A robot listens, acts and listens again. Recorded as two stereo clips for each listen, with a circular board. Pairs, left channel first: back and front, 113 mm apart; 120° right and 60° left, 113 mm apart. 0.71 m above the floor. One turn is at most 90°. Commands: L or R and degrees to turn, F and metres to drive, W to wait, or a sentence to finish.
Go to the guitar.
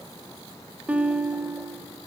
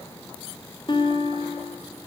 R75
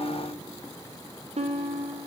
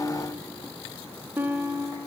R10
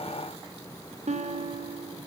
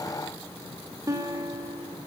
F1.0
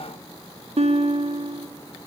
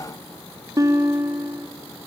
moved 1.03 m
F1.0
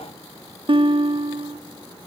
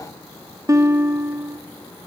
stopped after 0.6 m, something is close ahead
I am next to the guitar.